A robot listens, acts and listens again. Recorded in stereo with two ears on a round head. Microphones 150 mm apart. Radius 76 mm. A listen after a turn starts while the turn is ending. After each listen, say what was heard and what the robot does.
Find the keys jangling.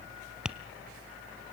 Keep listening.
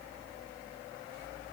Keep listening.
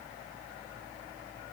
I can't make out keys jangling.